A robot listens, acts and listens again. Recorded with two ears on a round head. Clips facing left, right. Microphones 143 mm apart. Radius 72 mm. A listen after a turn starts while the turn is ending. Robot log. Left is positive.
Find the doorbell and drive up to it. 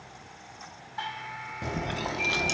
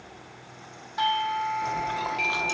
note: The doorbell: about 65° right or 115° right.
cmd yaw -65
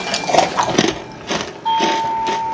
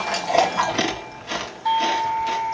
note: So it is at 15° right.
cmd yaw -15
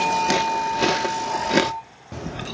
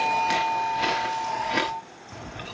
cmd fwd 1.0
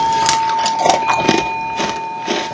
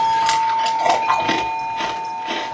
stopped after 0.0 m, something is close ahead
end: Something is in my way. I am facing the doorbell but have not reached it.